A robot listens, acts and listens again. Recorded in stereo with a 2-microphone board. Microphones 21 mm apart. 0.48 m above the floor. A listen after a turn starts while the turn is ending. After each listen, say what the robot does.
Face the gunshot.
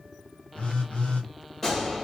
Turn 20° left.
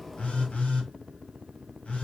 Keep listening.
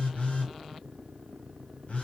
I heard a gunshot, but can't make it out now. It was about straight ahead or 140° left.